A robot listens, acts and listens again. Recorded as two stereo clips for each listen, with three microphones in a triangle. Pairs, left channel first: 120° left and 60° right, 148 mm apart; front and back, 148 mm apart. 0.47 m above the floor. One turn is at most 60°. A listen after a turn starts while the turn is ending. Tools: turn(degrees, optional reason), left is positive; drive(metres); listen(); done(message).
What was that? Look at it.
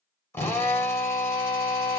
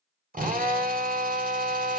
turn(degrees=-60, reason="The drill: 170° right.")
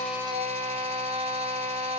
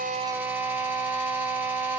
turn(degrees=-60, reason="The drill is now 105° right.")
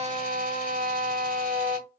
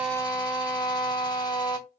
turn(degrees=-60, reason="The drill is now 60° right.")
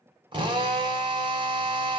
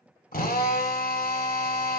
done("Facing the drill, 1 to 2 m away.")